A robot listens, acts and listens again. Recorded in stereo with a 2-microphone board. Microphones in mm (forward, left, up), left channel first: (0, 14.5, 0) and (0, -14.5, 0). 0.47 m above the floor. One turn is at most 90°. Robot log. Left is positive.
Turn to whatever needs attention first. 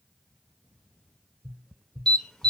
note: The alarm: about 20° left or 160° left.
cmd yaw +20
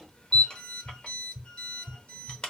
note: So it is at 130° left.
cmd yaw +90
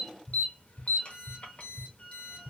note: The alarm is now 65° left.
cmd yaw +65
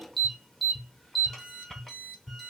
note: The alarm is now 10° left.
cmd yaw +10
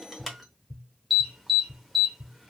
end: Facing the alarm, under 1 m away.